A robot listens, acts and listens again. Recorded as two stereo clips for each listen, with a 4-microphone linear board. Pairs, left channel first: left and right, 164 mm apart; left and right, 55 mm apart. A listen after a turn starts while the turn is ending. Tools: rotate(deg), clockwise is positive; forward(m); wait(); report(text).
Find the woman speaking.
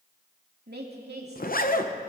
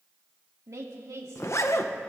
rotate(90)
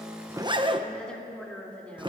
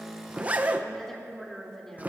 rotate(-10)
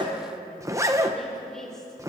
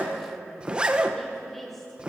report("Facing the woman speaking.")